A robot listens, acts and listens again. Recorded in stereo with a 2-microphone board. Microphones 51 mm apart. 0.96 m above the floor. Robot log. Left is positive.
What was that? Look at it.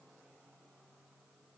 cmd idle
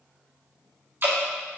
note: The dripping: about 50° right or 130° right.
cmd yaw -50
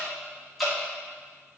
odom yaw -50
end: Facing the dripping.